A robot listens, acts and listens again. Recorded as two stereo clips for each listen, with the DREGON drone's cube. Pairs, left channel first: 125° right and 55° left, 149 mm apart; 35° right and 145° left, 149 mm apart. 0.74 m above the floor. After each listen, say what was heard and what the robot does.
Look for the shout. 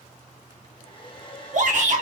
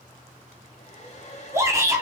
The shout: 75° left. Turn 75° left.
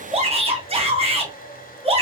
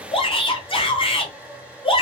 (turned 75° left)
The shout is now 15° left. Turn 15° left.
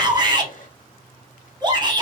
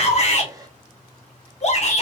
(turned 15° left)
Facing the shout.